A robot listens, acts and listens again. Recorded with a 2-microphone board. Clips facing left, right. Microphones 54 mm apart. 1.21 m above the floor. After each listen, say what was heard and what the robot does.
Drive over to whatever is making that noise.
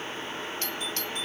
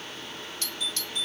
The doorbell: about 40° left or 140° left. Turn 40° left.
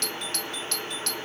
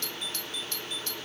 So it is at 100° left. Turn 100° left.
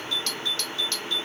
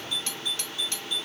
The doorbell is now 20° right. Turn 20° right.
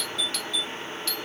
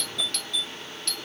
Drive 1.0 m forward.
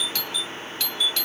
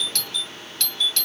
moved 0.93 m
The doorbell is now 10° left. Turn 10° left.
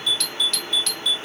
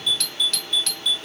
Drive 1.0 m forward.
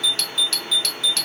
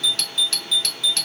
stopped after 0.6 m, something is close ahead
Arrived at the doorbell, straight ahead.